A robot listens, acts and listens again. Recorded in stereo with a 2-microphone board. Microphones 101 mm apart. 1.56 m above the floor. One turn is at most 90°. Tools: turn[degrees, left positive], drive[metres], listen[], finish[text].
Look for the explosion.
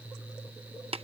Action: listen[]
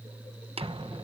Thought: The explosion: about 60° right or 120° right.
Action: turn[-60]
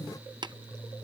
Action: listen[]
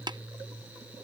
Action: finish[I heard an explosion, but can't make it out now. It was about straight ahead or 60° right.]